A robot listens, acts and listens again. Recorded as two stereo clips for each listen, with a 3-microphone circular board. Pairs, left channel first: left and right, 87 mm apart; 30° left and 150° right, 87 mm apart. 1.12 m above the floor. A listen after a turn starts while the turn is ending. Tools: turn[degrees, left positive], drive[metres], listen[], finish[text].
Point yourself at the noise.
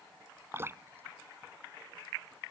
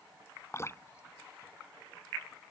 Thought: The dripping: 25° right.
Action: turn[-25]
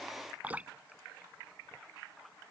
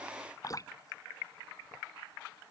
Thought: The dripping is now 15° right.
Action: turn[-15]
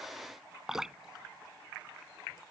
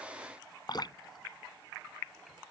Action: finish[Facing the dripping.]